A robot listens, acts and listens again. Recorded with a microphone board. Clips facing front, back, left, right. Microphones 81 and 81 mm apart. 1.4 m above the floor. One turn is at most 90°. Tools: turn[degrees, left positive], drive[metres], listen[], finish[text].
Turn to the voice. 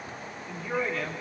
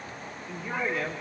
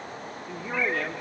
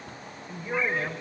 Thought: The man speaking: 105° left.
Action: turn[90]
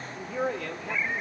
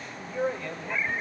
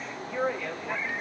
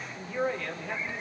Thought: The man speaking is now 15° left.
Action: turn[15]
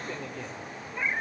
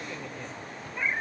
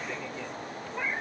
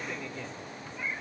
Action: listen[]
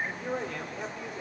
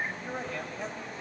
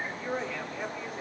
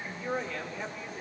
Action: finish[Facing the man speaking, over 4 m away.]